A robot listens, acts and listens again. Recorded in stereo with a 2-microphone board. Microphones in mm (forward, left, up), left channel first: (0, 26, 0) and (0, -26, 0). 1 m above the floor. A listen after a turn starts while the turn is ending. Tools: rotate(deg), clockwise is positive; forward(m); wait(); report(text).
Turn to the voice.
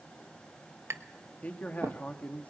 rotate(-30)
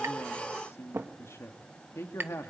rotate(-115)
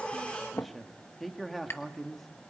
report("Found it: a man speaking, straight ahead.")